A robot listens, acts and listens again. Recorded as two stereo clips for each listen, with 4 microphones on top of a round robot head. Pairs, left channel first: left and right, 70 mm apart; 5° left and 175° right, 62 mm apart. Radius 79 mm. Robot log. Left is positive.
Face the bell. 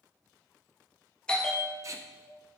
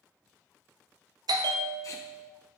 note: The bell: 170° left.
cmd yaw +170
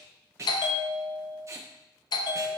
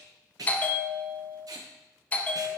note: The bell is now 70° left.
cmd yaw +70
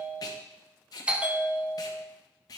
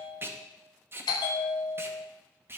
note: The bell is now 15° right.
cmd yaw -15
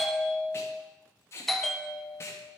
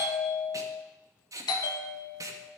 end: Facing the bell.